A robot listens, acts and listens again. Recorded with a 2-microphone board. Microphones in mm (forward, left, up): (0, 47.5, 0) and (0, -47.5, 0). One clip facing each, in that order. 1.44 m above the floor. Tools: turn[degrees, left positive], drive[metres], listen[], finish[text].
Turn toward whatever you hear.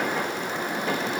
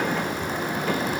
Action: listen[]
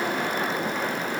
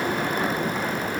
Action: listen[]
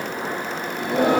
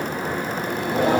Thought: The singing: about 65° left or 115° left.
Action: turn[65]
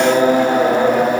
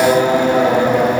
Thought: So it is at 40° left.
Action: turn[40]
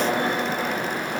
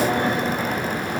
Action: finish[Found it: singing, straight ahead, over 4 m away.]